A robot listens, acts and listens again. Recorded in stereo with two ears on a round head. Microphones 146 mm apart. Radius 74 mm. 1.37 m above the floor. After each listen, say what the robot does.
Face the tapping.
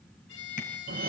Turn 55° left.
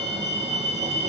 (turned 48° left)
Keep listening.
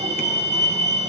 Keep listening.
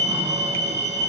I heard tapping, but can't make it out now. It was about 5° left or 80° left.